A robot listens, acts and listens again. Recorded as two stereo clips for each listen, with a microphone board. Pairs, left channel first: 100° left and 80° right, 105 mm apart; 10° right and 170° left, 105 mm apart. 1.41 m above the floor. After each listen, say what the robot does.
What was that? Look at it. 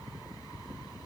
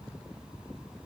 Keep listening.
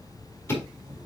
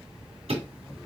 Turn 170° left.
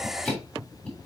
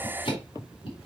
Turn 25° left.
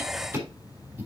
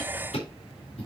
Found it: ticking, straight ahead, 2 to 4 m away.